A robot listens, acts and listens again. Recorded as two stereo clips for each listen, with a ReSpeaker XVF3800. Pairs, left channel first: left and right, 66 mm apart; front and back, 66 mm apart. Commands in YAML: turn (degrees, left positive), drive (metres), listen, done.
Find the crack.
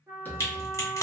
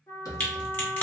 turn: 55
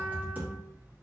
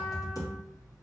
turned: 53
done: "I heard a crack from this way, but can't make it out now."